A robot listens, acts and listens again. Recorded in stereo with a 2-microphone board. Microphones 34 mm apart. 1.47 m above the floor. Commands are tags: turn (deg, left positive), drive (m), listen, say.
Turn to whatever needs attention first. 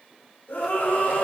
<turn deg="90"/>
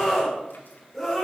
<say>Facing the scream, over 4 m away.</say>